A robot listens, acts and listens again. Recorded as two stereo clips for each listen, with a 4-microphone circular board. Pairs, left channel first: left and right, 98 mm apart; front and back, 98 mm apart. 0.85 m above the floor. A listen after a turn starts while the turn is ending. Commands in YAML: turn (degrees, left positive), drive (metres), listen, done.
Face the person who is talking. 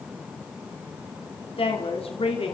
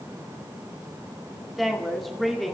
turn: 90
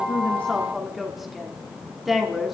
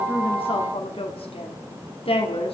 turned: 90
done: "Facing the woman speaking, 2 to 4 m away."